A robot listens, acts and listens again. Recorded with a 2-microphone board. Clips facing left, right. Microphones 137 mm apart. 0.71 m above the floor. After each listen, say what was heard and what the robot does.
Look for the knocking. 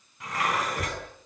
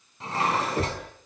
The knocking: about 65° right or 115° right. Turn 65° right.
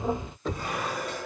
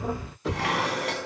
Found it: knocking, straight ahead.